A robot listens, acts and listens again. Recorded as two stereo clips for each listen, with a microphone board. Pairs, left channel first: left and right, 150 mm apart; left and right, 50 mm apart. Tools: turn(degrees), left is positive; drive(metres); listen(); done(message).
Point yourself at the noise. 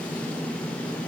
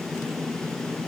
listen()
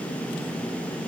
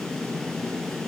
listen()
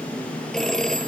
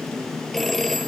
turn(degrees=30)
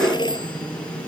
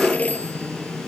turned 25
turn(degrees=150)
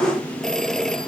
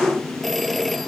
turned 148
done("Facing the phone ringing.")